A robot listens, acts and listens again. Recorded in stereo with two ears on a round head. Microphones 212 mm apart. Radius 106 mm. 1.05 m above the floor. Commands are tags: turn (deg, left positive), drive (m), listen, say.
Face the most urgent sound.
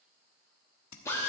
<listen/>
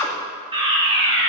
<turn deg="-25"/>
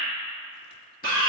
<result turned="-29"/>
<turn deg="-130"/>
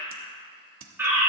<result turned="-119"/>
<turn deg="-10"/>
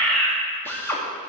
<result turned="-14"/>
<say>Facing the fire alarm, 2 to 4 m away.</say>